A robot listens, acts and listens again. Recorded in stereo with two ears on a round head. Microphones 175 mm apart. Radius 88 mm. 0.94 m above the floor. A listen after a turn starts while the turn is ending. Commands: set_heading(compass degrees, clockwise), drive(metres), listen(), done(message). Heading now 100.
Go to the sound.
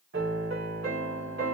set_heading(150)
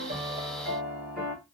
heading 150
drive(1.0)
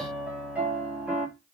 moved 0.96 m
drive(1.0)
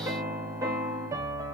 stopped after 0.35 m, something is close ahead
set_heading(165)
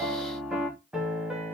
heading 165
done("Arrived at the piano, straight ahead.")